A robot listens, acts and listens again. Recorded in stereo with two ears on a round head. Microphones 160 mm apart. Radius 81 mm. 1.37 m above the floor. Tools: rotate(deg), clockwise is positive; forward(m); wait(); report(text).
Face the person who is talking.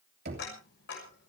wait()
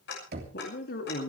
rotate(-55)
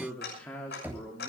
rotate(-10)
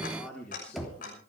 report("Found it: a man speaking, straight ahead.")